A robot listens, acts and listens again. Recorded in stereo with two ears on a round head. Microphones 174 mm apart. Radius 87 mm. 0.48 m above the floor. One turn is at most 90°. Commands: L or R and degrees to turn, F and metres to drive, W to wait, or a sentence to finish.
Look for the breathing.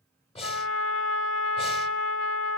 L35
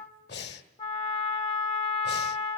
L90
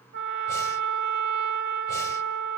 L15
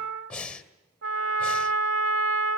Found it: breathing, straight ahead.